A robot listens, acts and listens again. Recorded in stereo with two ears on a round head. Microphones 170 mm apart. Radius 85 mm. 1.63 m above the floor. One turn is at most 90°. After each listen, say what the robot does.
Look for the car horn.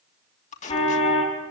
Turn 30° left.
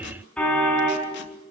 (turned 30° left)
Found it: a car horn, straight ahead.